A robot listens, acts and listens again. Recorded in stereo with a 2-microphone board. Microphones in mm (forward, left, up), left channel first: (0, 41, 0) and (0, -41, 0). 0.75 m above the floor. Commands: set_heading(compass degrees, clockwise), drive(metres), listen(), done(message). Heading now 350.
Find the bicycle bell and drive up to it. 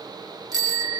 set_heading(50)
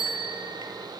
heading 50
set_heading(110)
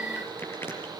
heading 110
listen()
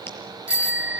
set_heading(120)
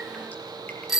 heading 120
drive(1.0)
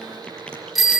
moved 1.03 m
drive(1.0)
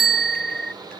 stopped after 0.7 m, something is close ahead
done("Arrived at the bicycle bell, straight ahead.")